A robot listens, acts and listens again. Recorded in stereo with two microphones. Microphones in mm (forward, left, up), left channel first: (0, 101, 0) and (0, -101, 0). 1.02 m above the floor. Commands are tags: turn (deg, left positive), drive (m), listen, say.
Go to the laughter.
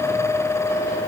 <listen/>
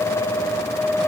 <listen/>
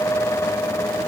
<say>I can't make out laughter.</say>